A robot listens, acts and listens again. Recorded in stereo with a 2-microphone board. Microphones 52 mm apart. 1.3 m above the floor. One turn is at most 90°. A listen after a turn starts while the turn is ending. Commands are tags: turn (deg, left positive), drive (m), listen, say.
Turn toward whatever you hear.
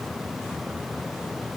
<listen/>
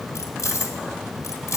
<turn deg="90"/>
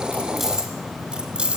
<turn deg="-20"/>
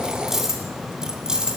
<turn deg="-10"/>
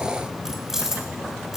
<say>Facing the keys jangling.</say>